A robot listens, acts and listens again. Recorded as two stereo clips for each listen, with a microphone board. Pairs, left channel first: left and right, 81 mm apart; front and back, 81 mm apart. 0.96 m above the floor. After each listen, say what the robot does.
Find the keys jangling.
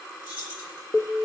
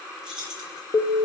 Turn 100° right.
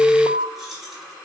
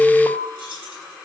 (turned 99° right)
Facing the keys jangling, over 4 m away.